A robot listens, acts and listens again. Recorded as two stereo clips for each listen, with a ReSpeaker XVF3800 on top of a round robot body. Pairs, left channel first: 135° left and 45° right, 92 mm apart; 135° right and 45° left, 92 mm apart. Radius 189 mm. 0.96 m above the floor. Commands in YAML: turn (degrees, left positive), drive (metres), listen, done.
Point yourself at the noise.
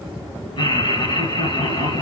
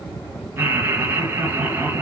turn: 110
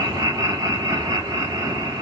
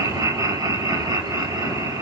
done: "Facing the laughter."